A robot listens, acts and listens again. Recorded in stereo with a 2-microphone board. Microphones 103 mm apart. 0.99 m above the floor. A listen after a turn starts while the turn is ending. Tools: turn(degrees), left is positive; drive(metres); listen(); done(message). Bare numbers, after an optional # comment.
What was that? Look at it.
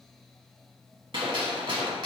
# The gunshot: about 55° right or 125° right.
turn(-55)
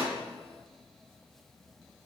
listen()
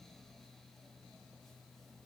done("I heard a gunshot, but can't make it out now. It was about straight ahead or 70° right.")